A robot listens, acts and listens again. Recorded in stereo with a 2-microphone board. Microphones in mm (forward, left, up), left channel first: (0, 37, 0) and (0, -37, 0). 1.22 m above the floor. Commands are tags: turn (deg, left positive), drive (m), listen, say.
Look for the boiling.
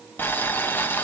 <turn deg="25"/>
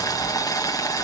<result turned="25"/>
<turn deg="130"/>
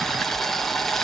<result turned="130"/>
<say>Found it: boiling, straight ahead.</say>